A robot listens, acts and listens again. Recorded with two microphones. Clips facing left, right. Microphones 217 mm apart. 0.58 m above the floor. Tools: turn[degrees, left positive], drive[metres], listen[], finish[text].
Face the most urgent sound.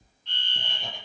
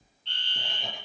Thought: The fire alarm: about 30° right or 150° right.
Action: turn[-30]
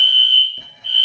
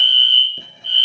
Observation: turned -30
Thought: So it is at 115° right.
Action: turn[-115]
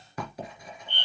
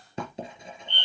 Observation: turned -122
Thought: The fire alarm is now 10° left.
Action: turn[10]
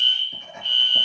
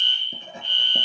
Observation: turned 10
Action: finish[Facing the fire alarm, 2 to 4 m away.]